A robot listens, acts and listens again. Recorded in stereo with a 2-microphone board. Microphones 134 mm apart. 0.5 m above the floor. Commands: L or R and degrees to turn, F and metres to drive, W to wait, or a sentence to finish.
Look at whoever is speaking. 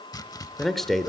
L30
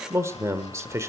R25
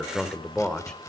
Facing the man speaking, 1 to 2 m away.